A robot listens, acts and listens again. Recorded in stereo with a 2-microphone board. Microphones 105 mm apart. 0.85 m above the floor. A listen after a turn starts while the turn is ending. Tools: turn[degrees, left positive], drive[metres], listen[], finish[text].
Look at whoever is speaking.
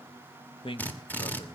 Thought: The man speaking: about 60° left or 120° left.
Action: turn[60]
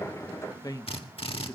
Thought: So it is at 40° left.
Action: turn[40]
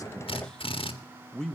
Thought: The man speaking is now 10° left.
Action: turn[10]
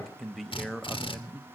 Action: finish[Facing the man speaking, under 1 m away.]